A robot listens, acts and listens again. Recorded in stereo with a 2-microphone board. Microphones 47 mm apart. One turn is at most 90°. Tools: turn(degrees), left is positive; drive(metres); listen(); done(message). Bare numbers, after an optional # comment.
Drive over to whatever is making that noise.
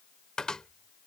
turn(30)
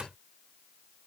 # So it is at 20° right.
turn(-20)
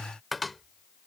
drive(1.0)
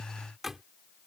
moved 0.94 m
# The cupboard door is now 10° right.
turn(-10)
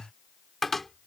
drive(1.0)
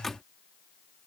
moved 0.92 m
drive(1.0)
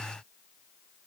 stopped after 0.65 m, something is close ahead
listen()
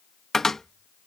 done("I am next to the cupboard door.")